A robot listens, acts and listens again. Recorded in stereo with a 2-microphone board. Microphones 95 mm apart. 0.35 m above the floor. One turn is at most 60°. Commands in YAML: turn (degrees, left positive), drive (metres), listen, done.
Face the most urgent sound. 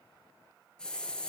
listen: true
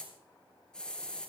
listen: true
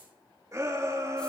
turn: -35
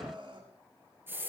turn: -60
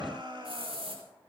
turn: -55
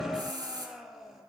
done: "Facing the shout."